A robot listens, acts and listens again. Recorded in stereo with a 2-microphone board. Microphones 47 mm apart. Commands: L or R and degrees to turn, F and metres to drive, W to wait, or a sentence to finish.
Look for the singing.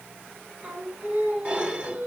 R35
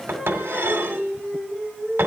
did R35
R10
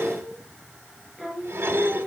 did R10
R10
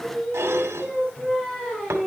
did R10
Facing the singing, over 4 m away.